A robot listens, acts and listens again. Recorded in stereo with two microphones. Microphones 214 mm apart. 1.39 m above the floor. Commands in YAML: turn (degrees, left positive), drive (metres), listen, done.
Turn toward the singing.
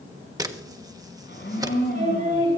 turn: -40
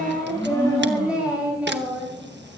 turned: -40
done: "Found it: singing, straight ahead."